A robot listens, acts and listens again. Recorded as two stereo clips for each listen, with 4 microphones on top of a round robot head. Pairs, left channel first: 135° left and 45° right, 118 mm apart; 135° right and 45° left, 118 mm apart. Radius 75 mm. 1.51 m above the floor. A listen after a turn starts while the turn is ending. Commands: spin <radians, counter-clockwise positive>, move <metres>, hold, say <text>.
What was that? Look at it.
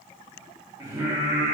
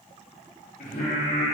spin -2.09
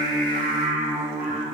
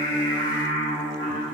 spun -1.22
spin -1.05
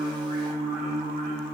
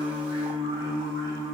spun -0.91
spin -0.35
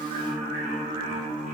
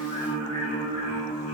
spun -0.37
spin -0.17
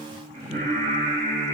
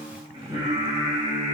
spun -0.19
say Found it: singing, straight ahead.